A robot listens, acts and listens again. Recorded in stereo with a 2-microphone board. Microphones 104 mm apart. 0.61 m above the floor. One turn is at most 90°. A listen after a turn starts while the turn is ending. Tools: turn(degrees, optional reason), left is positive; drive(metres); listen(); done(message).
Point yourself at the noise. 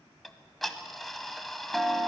turn(degrees=30)
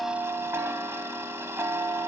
turn(degrees=-25, reason="So it is at 25° right.")
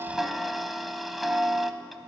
done("Found it: ticking, straight ahead.")